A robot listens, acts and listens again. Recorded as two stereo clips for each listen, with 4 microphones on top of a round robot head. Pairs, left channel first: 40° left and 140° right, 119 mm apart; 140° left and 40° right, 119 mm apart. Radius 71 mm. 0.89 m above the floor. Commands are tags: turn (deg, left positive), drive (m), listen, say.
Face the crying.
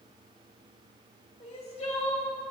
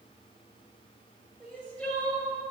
<turn deg="65"/>
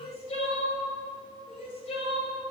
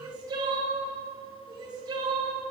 <turn deg="15"/>
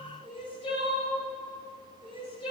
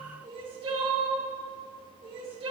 <say>Found it: crying, straight ahead.</say>